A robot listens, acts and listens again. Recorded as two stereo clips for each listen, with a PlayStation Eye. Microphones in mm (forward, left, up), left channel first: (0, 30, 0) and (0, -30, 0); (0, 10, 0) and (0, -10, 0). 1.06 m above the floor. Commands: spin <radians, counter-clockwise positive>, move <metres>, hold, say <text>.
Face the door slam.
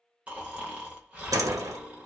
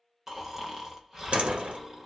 spin -1.31
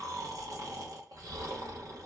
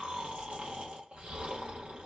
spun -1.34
hold
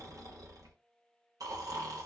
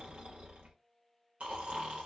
say I heard a door slam, but can't make it out now. It was about 5° left or 30° right.